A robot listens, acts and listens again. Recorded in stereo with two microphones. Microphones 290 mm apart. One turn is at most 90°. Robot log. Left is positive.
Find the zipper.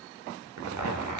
cmd yaw -90
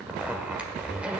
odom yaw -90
end: Facing the zipper, 1 to 2 m away.